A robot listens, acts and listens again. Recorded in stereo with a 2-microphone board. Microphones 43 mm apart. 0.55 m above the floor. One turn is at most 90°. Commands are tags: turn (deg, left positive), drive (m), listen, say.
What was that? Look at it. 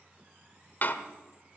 <turn deg="45"/>
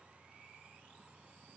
<listen/>
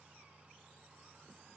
<say>I heard a door slam, but can't make it out now. It was about straight ahead or 90° left.</say>